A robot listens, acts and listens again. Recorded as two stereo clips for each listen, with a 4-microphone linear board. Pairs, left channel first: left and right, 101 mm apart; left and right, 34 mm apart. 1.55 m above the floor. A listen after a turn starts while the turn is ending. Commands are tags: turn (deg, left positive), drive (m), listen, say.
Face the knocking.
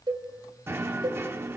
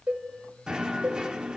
<turn deg="-25"/>
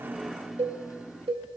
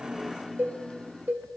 <say>Found it: knocking, straight ahead.</say>